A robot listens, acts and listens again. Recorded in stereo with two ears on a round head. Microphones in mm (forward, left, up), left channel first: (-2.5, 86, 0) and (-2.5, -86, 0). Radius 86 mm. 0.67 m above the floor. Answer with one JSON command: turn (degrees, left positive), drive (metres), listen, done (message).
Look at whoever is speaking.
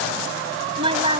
{"turn": -25}
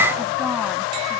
{"listen": true}
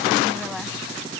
{"listen": true}
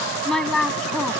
{"done": "Found it: a woman speaking, straight ahead."}